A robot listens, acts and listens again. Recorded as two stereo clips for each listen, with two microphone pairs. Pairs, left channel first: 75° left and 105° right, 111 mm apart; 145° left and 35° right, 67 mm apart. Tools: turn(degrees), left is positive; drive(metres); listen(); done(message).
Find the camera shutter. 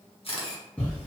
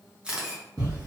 turn(degrees=40)
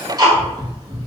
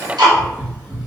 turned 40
listen()
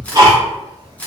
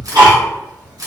done("Facing the camera shutter.")